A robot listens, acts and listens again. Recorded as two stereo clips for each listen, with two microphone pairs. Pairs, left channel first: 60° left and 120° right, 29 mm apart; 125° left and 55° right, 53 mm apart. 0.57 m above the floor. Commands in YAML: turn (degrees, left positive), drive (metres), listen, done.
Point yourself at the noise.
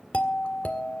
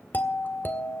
turn: 80
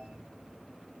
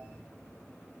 listen: true
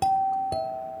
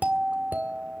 done: "Found it: a doorbell, straight ahead."